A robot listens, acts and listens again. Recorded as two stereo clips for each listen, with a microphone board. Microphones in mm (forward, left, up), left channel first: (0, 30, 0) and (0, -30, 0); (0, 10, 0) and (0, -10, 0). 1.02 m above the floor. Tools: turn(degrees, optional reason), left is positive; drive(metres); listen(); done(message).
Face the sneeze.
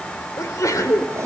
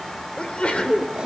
turn(degrees=70, reason="The sneeze: about 70° left or 110° left.")
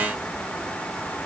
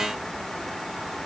listen()
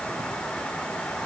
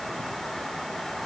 done("I heard a sneeze, but can't make it out now. It was about straight ahead or 40° left.")